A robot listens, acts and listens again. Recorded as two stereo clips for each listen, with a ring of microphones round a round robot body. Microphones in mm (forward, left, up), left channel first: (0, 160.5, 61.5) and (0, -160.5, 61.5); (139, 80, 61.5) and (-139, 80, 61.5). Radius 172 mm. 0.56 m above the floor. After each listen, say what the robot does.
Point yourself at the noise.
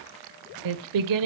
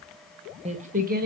Turn 120° right.
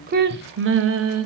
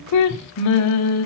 Turn 45° right.
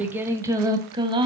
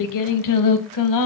Turn 15° right.
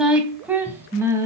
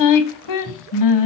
Turn 10° right.
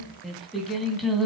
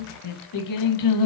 Facing the singing.